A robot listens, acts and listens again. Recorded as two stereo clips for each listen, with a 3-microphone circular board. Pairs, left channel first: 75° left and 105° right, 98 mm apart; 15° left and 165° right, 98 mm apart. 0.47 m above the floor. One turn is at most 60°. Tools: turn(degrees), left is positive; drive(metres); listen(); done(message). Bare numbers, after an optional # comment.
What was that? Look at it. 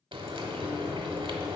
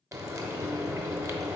# The frying: 115° right.
turn(-60)
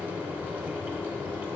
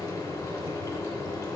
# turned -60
# The frying is now 35° right.
turn(-35)
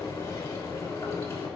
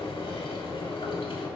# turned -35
# The frying is now 15° left.
turn(15)
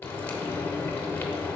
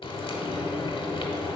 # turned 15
done("Facing the frying.")